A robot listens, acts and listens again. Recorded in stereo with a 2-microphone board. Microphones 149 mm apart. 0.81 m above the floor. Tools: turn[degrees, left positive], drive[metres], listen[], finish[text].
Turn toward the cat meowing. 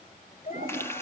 Thought: The cat meowing: about 50° left or 130° left.
Action: turn[50]
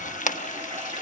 Action: listen[]
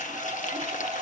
Action: listen[]
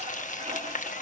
Action: finish[I heard a cat meowing, but can't make it out now. It was about straight ahead or 80° left.]